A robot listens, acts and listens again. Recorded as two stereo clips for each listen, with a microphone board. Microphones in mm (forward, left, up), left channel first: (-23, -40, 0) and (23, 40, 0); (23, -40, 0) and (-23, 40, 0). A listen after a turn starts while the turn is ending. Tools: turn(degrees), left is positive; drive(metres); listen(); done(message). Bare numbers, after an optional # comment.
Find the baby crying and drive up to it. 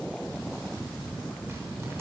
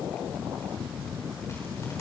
listen()
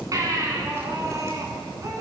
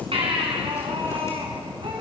# The baby crying: 110° left.
turn(110)
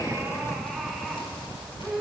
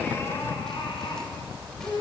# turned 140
# The baby crying is now 30° right.
turn(-30)
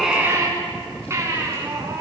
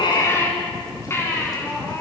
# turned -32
drive(1.0)
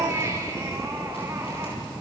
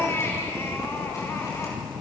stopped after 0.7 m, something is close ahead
done("Something is in my way. I am facing the baby crying but have not reached it.")